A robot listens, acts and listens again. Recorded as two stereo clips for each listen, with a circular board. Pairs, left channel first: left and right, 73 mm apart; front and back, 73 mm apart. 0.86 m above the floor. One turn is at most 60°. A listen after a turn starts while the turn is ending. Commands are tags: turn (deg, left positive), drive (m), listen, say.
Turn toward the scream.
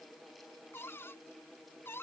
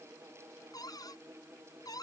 <listen/>
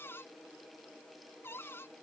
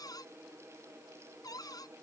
<listen/>
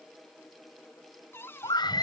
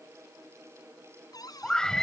<turn deg="60"/>
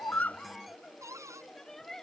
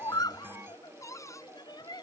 <say>Facing the scream.</say>